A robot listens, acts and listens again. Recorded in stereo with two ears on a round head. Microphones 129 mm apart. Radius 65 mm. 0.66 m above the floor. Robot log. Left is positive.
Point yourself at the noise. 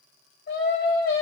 note: The singing: about 70° left or 110° left.
cmd yaw +70
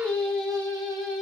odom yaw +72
end: Facing the singing, 1 to 2 m away.